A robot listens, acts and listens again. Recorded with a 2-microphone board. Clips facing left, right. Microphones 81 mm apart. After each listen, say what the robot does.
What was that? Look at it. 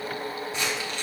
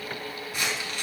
Turn 20° left.
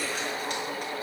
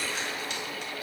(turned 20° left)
Keep listening.
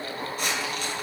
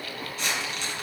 Turn 135° left.
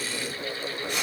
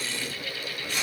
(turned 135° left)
Turn 20° left.
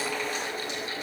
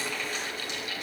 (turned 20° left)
Keep listening.
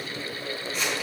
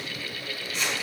Found it: crumpling, straight ahead.